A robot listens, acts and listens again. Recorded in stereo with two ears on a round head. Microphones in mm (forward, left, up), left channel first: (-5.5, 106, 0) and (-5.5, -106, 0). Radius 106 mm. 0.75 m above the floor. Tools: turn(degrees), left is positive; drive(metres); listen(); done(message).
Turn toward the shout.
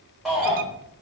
turn(degrees=30)
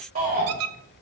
turn(degrees=-35)
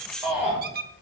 done("Found it: a shout, straight ahead.")